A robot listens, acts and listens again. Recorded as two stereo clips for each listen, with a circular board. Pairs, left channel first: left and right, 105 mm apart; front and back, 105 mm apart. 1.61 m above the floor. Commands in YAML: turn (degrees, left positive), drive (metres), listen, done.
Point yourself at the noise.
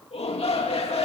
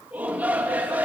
turn: 105
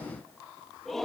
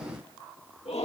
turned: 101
done: "Found it: a shout, straight ahead, 2 to 4 m away."